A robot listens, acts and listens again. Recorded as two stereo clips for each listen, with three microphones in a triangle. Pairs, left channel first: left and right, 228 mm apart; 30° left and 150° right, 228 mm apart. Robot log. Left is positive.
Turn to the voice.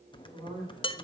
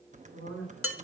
note: The woman speaking: 135° right.
cmd yaw -135
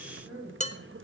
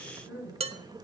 end: Found it: a woman speaking, straight ahead, over 4 m away.